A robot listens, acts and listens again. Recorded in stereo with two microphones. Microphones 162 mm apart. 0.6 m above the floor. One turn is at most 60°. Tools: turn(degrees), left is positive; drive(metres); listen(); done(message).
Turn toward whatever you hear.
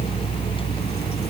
listen()
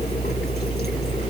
listen()
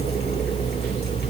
done("I can't make out anything.")